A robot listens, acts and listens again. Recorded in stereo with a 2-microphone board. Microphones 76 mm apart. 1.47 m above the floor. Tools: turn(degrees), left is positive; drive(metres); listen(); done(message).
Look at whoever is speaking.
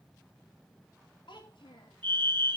turn(degrees=90)
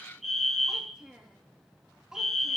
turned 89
turn(degrees=-10)
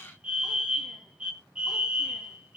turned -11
listen()
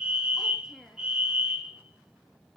done("Facing the child speaking.")